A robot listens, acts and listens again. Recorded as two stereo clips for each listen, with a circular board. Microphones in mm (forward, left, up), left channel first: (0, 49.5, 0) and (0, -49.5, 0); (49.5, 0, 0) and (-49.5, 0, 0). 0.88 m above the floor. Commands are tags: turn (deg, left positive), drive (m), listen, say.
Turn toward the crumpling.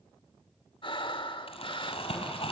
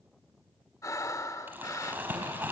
<turn deg="110"/>
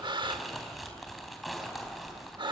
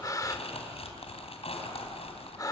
<say>Found it: crumpling, straight ahead.</say>